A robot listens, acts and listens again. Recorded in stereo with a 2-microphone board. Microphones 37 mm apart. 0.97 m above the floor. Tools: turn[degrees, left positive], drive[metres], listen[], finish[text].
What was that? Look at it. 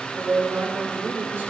Thought: The woman speaking: about 65° right or 115° right.
Action: turn[-65]
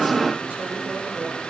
Action: listen[]
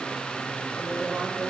Action: listen[]
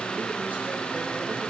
Action: finish[I heard a woman speaking, but can't make it out now. It was about straight ahead or 50° right.]